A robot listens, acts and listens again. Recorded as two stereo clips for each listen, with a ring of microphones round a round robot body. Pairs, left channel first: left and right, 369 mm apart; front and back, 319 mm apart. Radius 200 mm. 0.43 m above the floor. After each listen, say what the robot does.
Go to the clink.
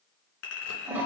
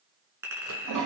Turn 100° left.
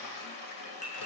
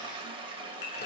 Turn 20° left.
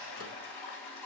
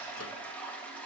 Keep listening.
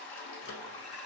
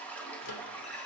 Keep listening.
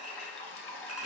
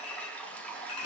Facing where the clink came from. I can't hear it now. I did not reach it.